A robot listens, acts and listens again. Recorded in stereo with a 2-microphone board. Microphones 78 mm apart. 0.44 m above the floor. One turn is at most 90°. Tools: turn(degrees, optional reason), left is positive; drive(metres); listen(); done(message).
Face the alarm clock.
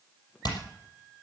listen()
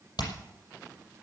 listen()
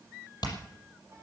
done("I can't make out an alarm clock to turn to.")